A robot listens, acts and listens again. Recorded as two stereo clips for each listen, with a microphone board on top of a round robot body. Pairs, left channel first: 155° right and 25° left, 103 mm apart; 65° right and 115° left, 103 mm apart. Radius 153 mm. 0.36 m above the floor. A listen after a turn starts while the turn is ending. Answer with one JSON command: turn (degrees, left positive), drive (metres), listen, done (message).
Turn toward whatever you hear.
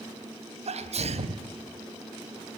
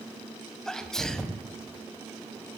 {"turn": 20}
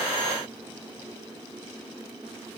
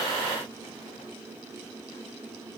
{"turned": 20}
{"done": "Facing where the sneeze came from. I can't hear it now."}